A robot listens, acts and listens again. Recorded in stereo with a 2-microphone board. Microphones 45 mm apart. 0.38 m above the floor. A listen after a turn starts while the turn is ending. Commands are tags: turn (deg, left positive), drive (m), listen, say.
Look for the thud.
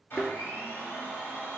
<turn deg="-30"/>
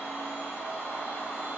<listen/>
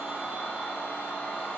<say>I heard a thud, but can't make it out now. It was about 25° left or 145° right.</say>